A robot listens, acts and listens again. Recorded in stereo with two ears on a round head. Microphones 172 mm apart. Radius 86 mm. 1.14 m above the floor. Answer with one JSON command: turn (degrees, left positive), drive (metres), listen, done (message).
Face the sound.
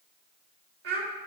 {"turn": -55}
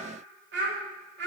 {"turn": -60}
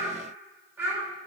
{"turn": -10}
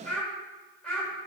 {"done": "Found it: a child speaking, straight ahead, 2 to 4 m away."}